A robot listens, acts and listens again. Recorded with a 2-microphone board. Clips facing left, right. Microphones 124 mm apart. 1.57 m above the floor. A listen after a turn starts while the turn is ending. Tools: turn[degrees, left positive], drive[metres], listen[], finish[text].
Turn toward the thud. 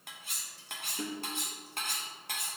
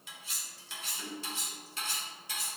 Action: listen[]
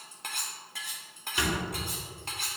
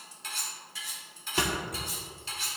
Thought: The thud: about 50° right or 130° right.
Action: turn[-50]
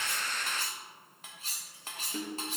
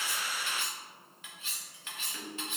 Action: listen[]
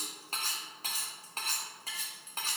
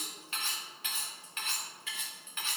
Action: finish[I heard a thud, but can't make it out now. It was about straight ahead or 80° right.]